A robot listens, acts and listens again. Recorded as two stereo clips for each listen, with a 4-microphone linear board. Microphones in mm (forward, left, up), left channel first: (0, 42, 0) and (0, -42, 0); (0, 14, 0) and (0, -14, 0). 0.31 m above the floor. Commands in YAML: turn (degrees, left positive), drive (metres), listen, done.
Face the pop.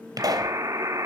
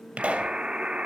turn: -45
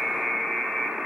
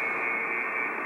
listen: true
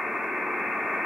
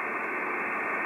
done: "I heard a pop, but can't make it out now. It was about straight ahead or 90° right."